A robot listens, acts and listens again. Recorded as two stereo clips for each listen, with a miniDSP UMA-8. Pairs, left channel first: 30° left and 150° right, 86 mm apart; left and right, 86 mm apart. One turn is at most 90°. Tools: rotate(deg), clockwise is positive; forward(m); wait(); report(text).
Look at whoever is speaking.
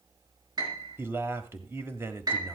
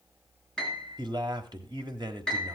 rotate(90)
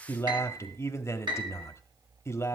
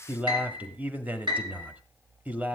rotate(20)
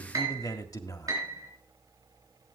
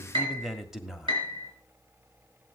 report("Found it: a man speaking, straight ahead, 1 to 2 m away.")